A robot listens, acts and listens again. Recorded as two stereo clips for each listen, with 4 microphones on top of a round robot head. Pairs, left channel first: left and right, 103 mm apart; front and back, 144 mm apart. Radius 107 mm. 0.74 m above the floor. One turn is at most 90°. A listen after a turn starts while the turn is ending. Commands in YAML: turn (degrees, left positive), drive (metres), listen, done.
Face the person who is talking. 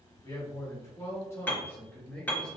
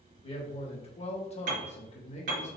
turn: 15
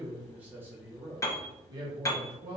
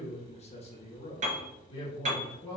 turn: -65
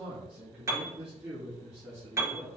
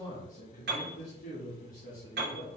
turn: -25
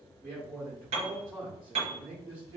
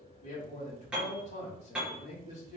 turn: 30
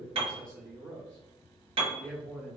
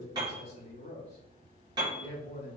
turn: 15
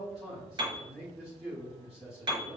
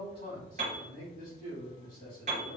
done: "Found it: a man speaking, straight ahead."